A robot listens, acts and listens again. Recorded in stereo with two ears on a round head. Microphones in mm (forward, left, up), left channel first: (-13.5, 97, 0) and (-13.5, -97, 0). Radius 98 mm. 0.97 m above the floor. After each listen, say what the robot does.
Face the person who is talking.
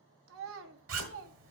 Turn 65° right.
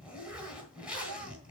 Keep listening.
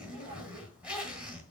Keep listening.
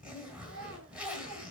Turn 50° right.
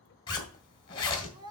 Turn 20° right.
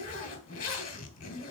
Keep listening.
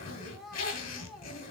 Found it: a child speaking, straight ahead.